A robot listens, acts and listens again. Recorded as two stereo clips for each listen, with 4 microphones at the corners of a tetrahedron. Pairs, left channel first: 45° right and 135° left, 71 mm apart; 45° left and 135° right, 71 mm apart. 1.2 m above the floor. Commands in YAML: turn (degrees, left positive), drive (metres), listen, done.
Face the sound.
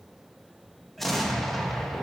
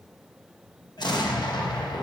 turn: 45
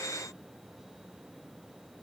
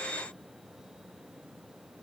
done: "I heard an explosion from this way, but can't make it out now."